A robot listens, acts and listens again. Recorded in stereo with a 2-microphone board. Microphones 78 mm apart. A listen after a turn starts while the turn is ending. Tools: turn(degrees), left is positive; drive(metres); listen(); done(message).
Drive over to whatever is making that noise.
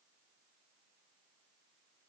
listen()
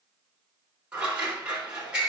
turn(degrees=-30)
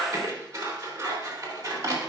turn(degrees=-135)
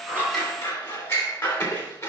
turn(degrees=35)
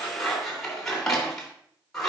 drive(metres=1.0)
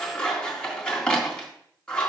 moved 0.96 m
turn(degrees=15)
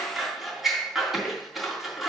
drive(metres=1.0)
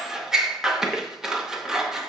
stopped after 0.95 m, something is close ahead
done("Arrived at the scissors, straight ahead.")